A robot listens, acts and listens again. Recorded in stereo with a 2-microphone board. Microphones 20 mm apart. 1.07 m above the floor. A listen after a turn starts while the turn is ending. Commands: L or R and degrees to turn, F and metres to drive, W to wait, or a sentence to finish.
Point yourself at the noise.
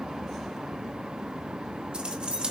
R70
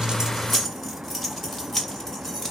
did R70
L20
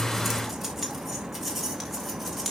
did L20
Facing the keys jangling.